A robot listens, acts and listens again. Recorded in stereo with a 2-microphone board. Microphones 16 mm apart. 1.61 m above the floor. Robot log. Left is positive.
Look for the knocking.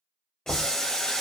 note: The knocking: about 65° left or 115° left.
cmd yaw +65
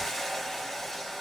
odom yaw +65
cmd idle
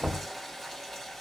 end: Facing the knocking.